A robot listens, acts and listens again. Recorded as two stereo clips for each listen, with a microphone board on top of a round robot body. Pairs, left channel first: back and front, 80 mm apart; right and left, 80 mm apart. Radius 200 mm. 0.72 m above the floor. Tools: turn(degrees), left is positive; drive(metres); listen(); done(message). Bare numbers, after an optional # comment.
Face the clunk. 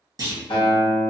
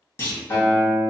# The clunk: 30° right.
turn(-30)
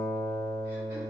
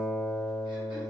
done("Facing where the clunk came from. I can't hear it now.")